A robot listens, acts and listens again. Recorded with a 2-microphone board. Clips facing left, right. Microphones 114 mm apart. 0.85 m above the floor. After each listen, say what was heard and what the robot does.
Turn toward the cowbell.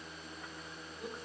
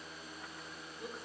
Keep listening.
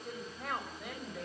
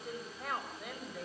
Keep listening.
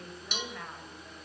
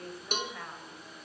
The cowbell: about 45° right or 135° right. Turn 45° right.
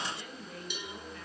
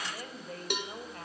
So it is at 85° right. Turn 85° right.
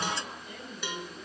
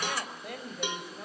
The cowbell is now 20° right. Turn 20° right.
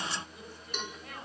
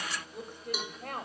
The cowbell is now 10° right. Turn 10° right.
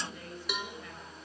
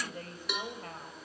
Facing the cowbell.